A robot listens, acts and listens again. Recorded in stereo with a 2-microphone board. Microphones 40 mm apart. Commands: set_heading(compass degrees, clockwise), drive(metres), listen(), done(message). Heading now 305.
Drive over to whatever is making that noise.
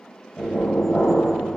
set_heading(285)
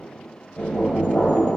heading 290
set_heading(145)
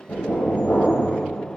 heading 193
set_heading(143)
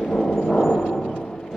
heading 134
set_heading(144)
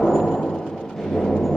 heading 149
drive(1.0)
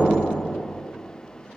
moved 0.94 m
drive(1.0)
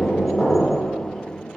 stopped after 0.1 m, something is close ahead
done("I am next to the knocking.")